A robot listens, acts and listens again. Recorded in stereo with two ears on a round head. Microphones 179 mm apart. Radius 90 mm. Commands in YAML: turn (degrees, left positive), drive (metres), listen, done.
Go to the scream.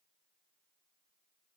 listen: true
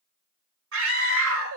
turn: -90
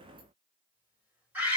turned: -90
turn: -10
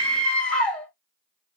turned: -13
drive: 1.0
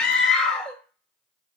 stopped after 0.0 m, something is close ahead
done: "Something is in my way. I am facing the scream but have not reached it."